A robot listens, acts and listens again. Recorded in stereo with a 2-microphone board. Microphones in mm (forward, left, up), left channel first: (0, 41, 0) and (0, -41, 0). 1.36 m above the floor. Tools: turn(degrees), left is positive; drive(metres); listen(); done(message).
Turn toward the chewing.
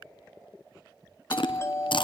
turn(degrees=70)
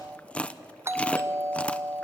turn(degrees=15)
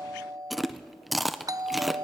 done("Facing the chewing.")